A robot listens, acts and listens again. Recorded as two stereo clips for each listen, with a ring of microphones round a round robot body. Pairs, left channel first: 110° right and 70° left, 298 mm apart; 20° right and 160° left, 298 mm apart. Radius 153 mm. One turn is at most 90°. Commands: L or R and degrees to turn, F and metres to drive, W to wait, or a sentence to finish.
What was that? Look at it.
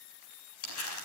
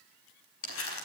R70
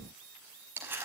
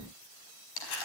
R15
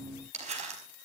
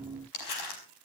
Facing the crumpling.